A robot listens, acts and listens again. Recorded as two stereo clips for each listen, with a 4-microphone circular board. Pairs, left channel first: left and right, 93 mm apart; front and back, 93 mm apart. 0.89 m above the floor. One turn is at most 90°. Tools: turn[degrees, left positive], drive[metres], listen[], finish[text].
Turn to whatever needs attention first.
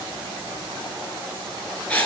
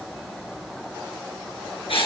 Action: listen[]
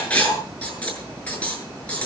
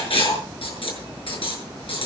Action: listen[]
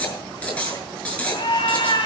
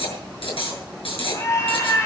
Thought: The scream: 55° left.
Action: turn[55]
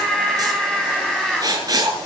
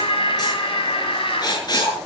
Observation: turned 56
Action: finish[Facing the scream.]